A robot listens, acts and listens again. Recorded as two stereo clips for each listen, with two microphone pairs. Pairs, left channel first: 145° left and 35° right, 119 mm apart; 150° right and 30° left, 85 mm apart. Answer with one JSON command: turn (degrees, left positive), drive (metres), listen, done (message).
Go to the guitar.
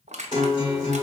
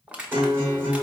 {"turn": 95}
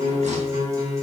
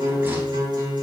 {"turn": 20}
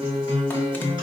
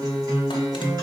{"drive": 1.0}
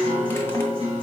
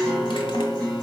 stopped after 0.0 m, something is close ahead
{"done": "Blocked. The guitar is further on, straight ahead."}